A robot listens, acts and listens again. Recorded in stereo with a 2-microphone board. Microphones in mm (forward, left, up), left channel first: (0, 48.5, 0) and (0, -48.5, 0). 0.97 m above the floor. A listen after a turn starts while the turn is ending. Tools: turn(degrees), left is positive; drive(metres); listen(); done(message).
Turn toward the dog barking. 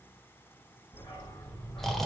turn(degrees=25)
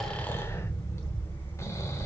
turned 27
turn(degrees=35)
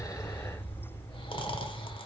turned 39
turn(degrees=115)
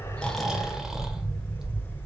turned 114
done("Found it: a dog barking, straight ahead, over 4 m away.")